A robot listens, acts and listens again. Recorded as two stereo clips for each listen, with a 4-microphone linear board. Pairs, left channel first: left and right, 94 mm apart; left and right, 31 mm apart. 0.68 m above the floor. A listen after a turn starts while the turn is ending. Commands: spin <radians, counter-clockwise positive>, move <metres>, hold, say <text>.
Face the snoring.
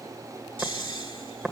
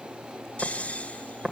spin 1.22
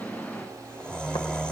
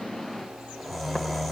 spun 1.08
spin 0.17
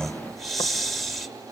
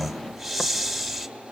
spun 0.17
say Found it: snoring, straight ahead, 1 to 2 m away.